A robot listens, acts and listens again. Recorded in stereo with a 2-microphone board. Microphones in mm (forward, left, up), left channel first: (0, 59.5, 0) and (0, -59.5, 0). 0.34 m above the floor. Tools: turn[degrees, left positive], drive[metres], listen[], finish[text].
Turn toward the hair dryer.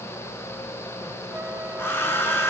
Thought: The hair dryer: about 20° left or 160° left.
Action: turn[20]
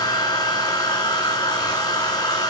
Thought: So it is at 140° left.
Action: turn[140]
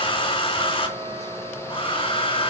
Thought: The hair dryer is now 50° left.
Action: turn[50]
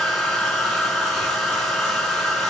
Action: finish[Facing the hair dryer.]